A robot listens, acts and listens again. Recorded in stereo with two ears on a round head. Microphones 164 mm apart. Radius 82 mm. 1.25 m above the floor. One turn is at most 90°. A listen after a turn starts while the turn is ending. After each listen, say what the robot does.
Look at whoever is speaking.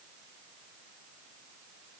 Keep listening.
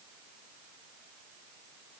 Keep listening.
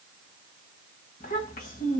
Turn 45° left.
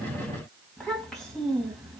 Found it: a child speaking, straight ahead, 1 to 2 m away.